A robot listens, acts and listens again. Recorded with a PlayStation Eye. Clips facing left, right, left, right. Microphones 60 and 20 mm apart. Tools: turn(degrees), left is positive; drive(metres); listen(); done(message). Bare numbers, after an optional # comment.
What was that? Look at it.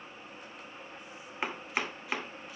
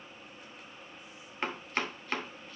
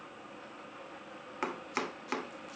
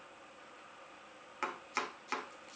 turn(30)
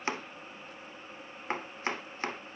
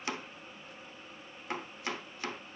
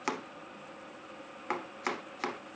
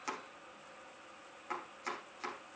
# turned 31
# So it is at 140° left.
turn(140)
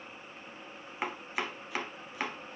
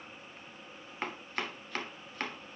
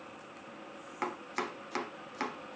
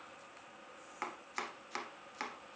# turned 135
# The chopping is now 10° left.
turn(10)
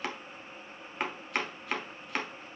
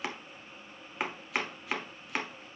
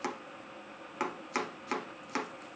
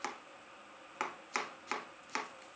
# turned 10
done("Found it: chopping, straight ahead, 1 to 2 m away.")